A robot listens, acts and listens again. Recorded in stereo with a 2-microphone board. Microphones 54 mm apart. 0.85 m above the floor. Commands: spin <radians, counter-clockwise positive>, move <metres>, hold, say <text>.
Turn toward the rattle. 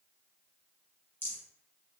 spin 0.79
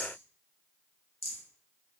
spin 1.40
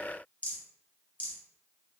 spin 0.52
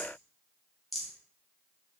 say Facing the rattle, 1 to 2 m away.